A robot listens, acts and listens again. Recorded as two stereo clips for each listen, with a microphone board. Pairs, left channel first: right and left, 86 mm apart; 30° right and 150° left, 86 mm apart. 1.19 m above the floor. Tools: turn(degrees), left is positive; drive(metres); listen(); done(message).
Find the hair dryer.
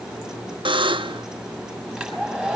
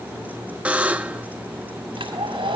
turn(degrees=180)
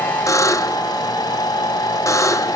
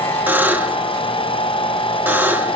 turn(degrees=-40)
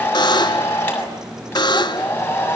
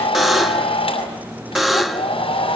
turn(degrees=-20)
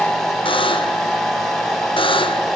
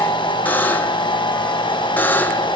done("Found it: a hair dryer, straight ahead.")